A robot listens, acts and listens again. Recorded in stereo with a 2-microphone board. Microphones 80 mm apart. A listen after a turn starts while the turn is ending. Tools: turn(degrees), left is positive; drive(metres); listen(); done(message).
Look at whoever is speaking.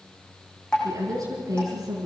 turn(degrees=-55)
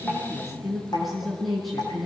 done("Found it: a woman speaking, straight ahead, over 4 m away.")